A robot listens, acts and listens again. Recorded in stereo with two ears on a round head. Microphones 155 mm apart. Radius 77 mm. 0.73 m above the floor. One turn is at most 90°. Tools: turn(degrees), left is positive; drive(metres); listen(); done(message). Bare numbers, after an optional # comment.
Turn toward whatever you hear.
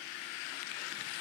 listen()
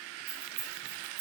# The keys jangling: about 55° right or 125° right.
turn(-55)
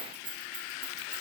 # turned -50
# So it is at 70° right.
turn(-70)
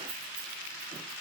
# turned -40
# Nothing new. It was at 30° right.
turn(-30)
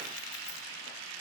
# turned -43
# Nothing new. It was at 10° left.
turn(10)
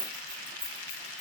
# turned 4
done("Facing the keys jangling.")